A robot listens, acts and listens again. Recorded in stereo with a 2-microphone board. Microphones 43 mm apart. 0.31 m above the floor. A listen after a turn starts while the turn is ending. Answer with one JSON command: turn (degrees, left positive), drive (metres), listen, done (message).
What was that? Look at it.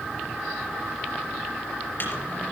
{"turn": 45}
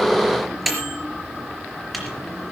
{"done": "Found it: a microwave, straight ahead."}